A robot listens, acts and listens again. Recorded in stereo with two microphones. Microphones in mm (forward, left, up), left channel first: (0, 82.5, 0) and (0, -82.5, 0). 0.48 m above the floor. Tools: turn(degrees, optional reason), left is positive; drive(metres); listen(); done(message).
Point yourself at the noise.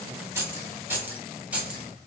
turn(degrees=-30)
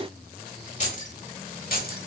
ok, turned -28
turn(degrees=60, reason="So it is at 60° left.")
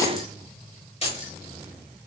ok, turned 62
turn(degrees=40, reason="The keys jangling is now 40° left.")
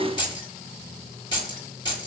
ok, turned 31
turn(degrees=25, reason="The keys jangling is now 25° left.")
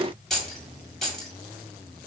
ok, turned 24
done("Facing the keys jangling, 1 to 2 m away.")